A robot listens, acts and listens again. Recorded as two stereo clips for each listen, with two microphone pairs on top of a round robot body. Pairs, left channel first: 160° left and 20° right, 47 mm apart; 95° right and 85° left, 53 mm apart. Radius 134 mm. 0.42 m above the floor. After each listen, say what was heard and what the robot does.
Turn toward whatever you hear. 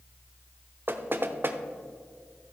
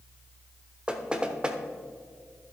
The knocking: 15° left. Turn 15° left.
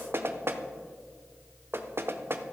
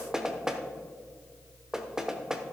Found it: knocking, straight ahead, 1 to 2 m away.